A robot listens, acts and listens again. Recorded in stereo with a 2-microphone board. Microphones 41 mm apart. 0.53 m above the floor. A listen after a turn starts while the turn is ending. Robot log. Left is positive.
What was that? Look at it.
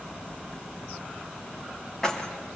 cmd yaw +30
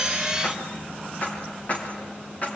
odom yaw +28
note: So it is at 145° left.
cmd yaw +145
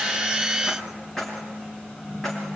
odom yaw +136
note: The keys jangling is now 10° left.
cmd yaw +10
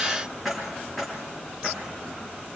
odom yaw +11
end: Found it: keys jangling, straight ahead.